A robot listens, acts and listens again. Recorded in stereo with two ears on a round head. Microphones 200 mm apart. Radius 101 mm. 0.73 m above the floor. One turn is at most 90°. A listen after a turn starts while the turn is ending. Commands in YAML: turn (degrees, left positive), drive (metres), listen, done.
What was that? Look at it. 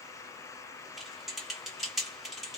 turn: 30
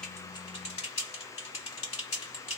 turn: 90
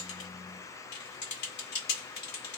turn: 50
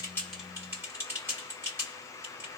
turn: -10
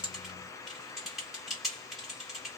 done: "Found it: typing on a keyboard, straight ahead, 1 to 2 m away."